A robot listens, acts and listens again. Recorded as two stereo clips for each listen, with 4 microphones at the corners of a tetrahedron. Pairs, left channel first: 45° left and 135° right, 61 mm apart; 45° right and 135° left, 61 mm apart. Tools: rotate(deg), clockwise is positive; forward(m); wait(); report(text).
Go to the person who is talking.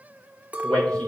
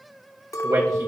rotate(-120)
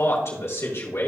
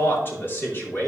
forward(1.0)
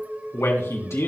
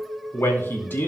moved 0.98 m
forward(1.0)
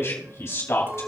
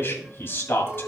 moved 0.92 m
forward(1.0)
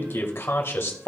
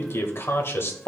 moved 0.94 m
forward(1.0)
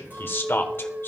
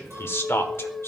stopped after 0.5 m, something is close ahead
report("I am next to the man speaking.")